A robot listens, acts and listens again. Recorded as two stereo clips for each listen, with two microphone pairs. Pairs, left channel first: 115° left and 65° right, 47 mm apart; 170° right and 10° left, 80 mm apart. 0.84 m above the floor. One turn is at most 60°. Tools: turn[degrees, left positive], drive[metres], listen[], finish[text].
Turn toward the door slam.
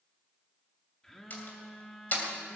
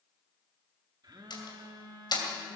Thought: The door slam: 165° left.
Action: turn[60]
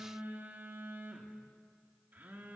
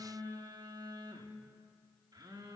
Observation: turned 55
Thought: Nothing new. It was at 110° left.
Action: turn[60]
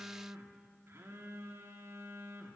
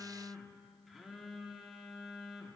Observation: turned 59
Thought: Nothing new. It was at 55° left.
Action: turn[55]
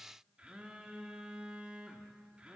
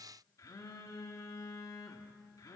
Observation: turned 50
Action: finish[I heard a door slam from this way, but can't make it out now.]